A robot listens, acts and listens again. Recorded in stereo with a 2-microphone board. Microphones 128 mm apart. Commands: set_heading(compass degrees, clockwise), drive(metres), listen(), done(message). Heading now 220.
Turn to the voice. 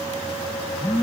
listen()
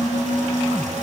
listen()
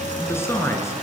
set_heading(200)
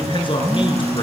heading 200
set_heading(65)
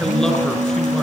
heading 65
done("Found it: a man speaking, straight ahead, over 4 m away.")